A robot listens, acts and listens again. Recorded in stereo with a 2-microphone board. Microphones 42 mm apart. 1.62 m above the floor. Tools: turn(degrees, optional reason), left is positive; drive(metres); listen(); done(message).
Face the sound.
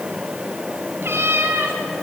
turn(degrees=-65, reason="The cat meowing: about 65° right or 115° right.")
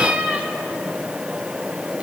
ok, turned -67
turn(degrees=-30, reason="So it is at 30° right.")
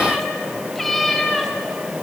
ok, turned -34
done("Found it: a cat meowing, straight ahead, 2 to 4 m away.")